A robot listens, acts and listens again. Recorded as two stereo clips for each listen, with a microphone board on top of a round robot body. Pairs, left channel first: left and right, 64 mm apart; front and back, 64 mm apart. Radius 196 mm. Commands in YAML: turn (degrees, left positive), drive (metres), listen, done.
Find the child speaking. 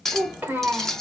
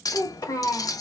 turn: -30
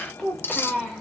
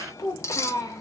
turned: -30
done: "Found it: a child speaking, straight ahead, 1 to 2 m away."